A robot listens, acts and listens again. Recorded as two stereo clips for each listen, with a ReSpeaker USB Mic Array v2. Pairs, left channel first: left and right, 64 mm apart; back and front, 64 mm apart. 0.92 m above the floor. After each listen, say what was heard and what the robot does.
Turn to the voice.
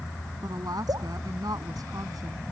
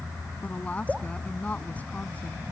The woman speaking: 115° right. Turn 115° right.
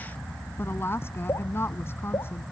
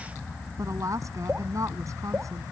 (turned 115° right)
The woman speaking is now 35° left. Turn 35° left.
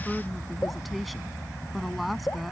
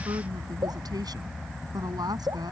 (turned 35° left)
Facing the woman speaking.